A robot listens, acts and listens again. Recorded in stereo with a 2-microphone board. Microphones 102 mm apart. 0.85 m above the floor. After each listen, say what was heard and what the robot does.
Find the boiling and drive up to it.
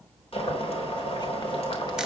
The boiling: about 75° left or 105° left. Turn 75° left.
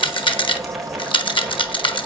Drive 1.0 m forward.
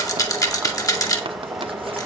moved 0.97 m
Drive 1.0 m forward.
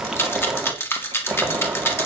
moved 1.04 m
Drive 1.0 m forward.
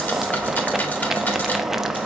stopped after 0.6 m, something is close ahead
I am next to the boiling.